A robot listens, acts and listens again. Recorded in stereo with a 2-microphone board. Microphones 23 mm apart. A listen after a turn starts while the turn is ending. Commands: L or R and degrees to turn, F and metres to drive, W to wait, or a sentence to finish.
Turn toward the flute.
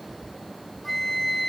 L30
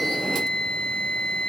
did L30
L135
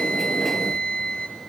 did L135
L50
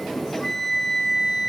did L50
L10
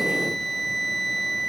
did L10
Facing the flute, 2 to 4 m away.